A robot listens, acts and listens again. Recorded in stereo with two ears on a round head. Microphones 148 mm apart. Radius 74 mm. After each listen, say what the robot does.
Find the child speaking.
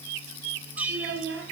Turn 90° right.
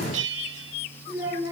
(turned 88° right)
Turn 20° right.
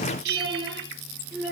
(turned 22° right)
Found it: a child speaking, straight ahead, over 4 m away.